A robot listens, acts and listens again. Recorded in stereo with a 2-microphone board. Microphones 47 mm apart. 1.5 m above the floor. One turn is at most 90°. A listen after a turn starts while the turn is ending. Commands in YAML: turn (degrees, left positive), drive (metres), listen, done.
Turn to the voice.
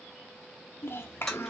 turn: 55
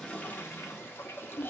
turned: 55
turn: 55
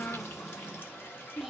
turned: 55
done: "Facing the child speaking, under 1 m away."